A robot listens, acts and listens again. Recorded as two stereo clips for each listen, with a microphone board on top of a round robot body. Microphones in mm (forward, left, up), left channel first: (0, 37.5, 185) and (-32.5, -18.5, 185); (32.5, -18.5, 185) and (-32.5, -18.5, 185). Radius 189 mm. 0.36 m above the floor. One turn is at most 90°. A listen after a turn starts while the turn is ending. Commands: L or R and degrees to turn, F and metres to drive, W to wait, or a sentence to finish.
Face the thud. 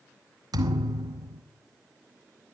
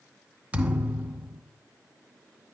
R90
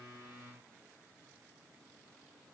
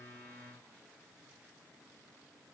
R25
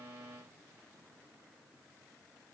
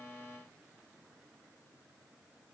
I heard a thud from this way, but can't make it out now.